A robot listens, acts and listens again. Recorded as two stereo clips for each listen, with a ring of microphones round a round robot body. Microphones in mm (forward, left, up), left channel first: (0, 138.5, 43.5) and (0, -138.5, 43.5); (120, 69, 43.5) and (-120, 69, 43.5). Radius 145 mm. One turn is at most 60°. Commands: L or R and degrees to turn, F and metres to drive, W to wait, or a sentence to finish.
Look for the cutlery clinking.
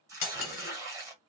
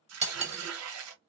L60
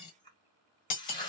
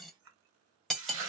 L60
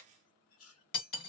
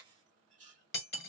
L45
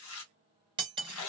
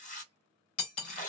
R20
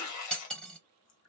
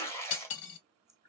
Facing the cutlery clinking, 1 to 2 m away.